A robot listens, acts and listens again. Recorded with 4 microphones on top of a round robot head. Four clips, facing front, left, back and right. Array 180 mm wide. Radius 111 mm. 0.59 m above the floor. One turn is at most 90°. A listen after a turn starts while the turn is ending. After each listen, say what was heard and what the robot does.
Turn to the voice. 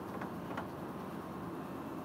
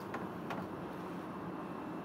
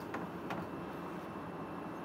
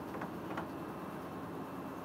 Keep listening.
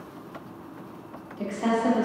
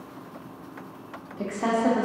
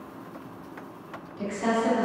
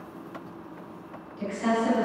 The woman speaking: 75° left. Turn 75° left.
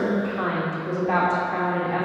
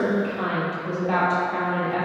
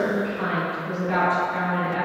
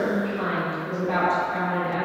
The woman speaking is now 20° left. Turn 20° left.
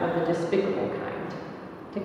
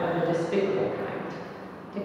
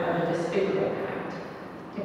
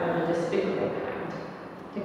Facing the woman speaking, 1 to 2 m away.